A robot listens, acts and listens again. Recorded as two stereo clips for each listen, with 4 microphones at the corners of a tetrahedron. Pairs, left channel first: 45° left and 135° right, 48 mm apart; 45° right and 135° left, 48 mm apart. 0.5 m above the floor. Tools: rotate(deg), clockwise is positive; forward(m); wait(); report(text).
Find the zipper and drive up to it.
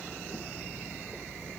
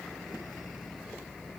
wait()
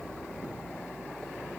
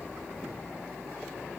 wait()
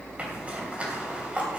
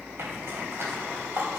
rotate(-160)
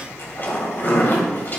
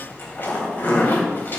forward(1.0)
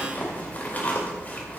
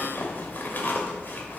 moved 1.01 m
forward(1.0)
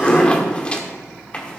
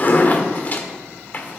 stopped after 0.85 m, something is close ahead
rotate(10)
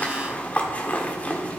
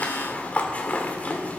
report("Arrived at the zipper, straight ahead.")